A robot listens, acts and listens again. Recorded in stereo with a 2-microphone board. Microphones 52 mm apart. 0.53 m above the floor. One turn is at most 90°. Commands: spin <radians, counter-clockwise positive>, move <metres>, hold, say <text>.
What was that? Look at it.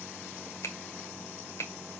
spin 1.13
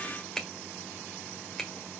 spin 0.17
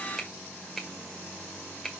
say Found it: a finger snap, straight ahead, 1 to 2 m away.